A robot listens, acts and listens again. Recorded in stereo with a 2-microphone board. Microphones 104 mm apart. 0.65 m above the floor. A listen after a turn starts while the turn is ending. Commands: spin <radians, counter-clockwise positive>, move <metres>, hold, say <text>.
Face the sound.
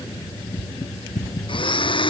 spin 0.96
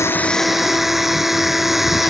say Facing the blender.